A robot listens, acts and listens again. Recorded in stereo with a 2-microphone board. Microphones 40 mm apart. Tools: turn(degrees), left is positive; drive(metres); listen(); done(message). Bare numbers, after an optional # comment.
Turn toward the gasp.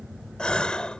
# The gasp: about 25° left or 155° left.
turn(25)
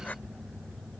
listen()
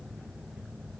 done("I heard a gasp, but can't make it out now. It was about straight ahead or 130° left.")